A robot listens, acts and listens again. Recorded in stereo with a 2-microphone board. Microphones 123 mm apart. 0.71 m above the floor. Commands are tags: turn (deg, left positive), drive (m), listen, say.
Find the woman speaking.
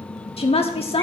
<turn deg="55"/>
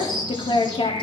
<turn deg="55"/>
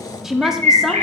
<say>Found it: a woman speaking, straight ahead.</say>